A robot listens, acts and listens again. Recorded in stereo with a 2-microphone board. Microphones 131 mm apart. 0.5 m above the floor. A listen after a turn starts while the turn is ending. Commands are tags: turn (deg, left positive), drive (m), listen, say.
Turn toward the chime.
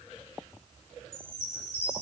<turn deg="55"/>
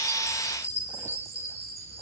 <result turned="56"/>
<turn deg="65"/>
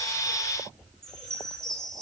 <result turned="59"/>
<say>Found it: a chime, straight ahead, 2 to 4 m away.</say>